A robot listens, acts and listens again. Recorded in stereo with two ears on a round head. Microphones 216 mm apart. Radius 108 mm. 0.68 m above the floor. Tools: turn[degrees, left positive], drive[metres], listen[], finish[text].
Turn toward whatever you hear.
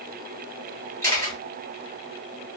Action: turn[30]
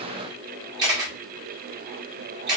Thought: So it is at 20° right.
Action: turn[-20]
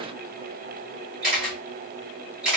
Action: finish[Found it: a camera shutter, straight ahead.]